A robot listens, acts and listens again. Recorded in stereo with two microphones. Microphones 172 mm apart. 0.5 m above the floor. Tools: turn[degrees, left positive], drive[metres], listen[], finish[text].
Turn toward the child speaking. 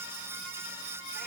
Action: listen[]
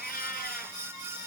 Action: listen[]
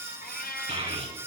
Thought: The child speaking: about 35° right or 145° right.
Action: turn[-35]
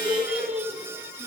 Action: finish[Found it: a child speaking, straight ahead, over 4 m away.]